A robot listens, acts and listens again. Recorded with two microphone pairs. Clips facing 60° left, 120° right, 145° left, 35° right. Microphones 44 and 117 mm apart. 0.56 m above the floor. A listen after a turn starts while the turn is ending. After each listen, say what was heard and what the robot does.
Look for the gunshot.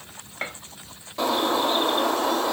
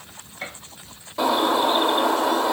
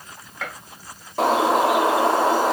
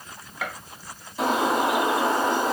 The gunshot: 40° left. Turn 40° left.
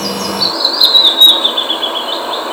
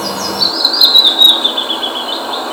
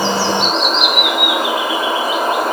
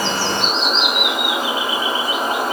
Facing where the gunshot came from. I can't hear it now.